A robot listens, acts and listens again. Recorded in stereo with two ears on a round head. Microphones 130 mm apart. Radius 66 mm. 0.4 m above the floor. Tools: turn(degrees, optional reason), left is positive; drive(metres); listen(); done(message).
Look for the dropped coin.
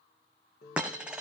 turn(degrees=-30)
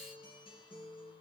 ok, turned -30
listen()
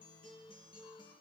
done("I heard a dropped coin, but can't make it out now. It was about 25° left or 145° right.")